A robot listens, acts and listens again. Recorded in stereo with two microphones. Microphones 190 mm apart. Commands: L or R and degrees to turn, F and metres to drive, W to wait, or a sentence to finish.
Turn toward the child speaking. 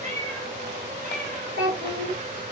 R60
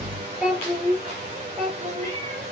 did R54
Found it: a child speaking, straight ahead.